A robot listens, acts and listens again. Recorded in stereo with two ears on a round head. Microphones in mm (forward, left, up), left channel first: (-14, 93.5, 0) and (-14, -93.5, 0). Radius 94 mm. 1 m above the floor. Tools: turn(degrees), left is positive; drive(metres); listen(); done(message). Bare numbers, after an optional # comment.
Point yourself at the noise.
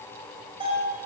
# The bell: about 25° right or 155° right.
turn(-25)
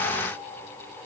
listen()
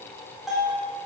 done("Found it: a bell, straight ahead.")